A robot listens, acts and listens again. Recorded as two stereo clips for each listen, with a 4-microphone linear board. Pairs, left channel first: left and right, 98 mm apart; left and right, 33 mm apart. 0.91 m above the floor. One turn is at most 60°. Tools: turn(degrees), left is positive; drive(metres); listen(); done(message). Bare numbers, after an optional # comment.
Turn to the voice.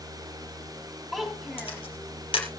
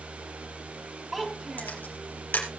turn(30)
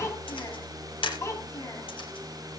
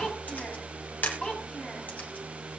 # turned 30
# So it is at 150° left.
turn(60)
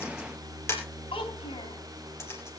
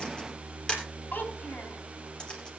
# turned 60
# The child speaking is now 110° left.
turn(60)
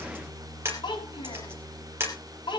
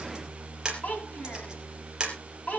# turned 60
# The child speaking is now 55° left.
turn(55)
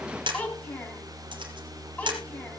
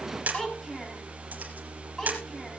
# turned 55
# The child speaking is now 15° left.
turn(15)
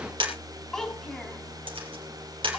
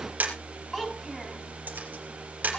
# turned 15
done("Facing the child speaking, over 4 m away.")